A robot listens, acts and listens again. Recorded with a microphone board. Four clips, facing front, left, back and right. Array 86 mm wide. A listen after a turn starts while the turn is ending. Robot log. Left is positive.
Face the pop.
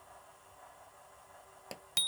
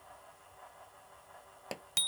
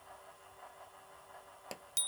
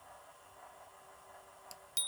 note: The pop: 95° left.
cmd yaw +95
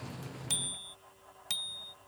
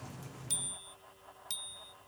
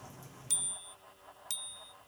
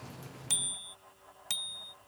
end: Facing where the pop came from. I can't hear it now.